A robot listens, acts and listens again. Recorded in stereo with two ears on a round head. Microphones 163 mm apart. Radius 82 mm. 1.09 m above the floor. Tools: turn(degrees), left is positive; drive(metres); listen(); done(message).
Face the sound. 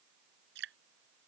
turn(degrees=-75)
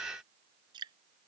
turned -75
turn(degrees=-25)
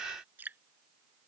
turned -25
turn(degrees=-10)
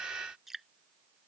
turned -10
done("Facing the dripping.")